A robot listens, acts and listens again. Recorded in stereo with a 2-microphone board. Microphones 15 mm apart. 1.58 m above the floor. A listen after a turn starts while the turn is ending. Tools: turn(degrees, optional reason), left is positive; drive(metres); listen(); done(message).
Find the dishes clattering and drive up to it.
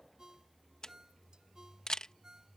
listen()
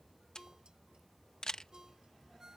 listen()
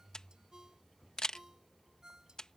done("I can't make out dishes clattering, only a ringtone and a camera shutter.")